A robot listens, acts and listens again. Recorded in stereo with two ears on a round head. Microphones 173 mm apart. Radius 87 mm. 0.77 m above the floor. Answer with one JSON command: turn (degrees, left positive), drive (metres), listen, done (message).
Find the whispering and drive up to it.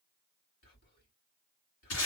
{"turn": 50}
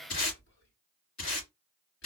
{"turn": 70}
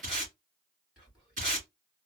{"drive": 1.0}
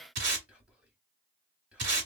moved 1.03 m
{"turn": -10}
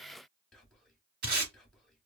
{"drive": 1.0}
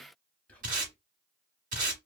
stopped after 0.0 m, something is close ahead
{"turn": 10}
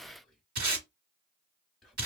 {"done": "I am next to the whispering."}